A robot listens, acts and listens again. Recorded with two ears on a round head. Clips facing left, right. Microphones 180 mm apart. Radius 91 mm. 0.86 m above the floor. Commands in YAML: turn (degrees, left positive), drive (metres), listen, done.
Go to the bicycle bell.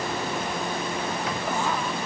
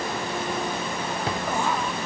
listen: true
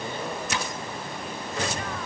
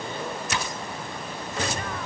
listen: true
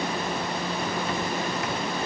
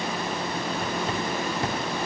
done: "I can't make out a bicycle bell, only a drawer."